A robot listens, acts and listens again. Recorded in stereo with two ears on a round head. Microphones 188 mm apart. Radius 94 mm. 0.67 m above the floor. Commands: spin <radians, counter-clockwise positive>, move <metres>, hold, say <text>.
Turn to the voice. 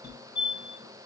hold
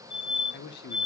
spin 0.87
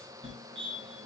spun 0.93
hold
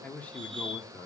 spin 0.17
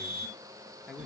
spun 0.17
say Found it: a man speaking, straight ahead, 1 to 2 m away.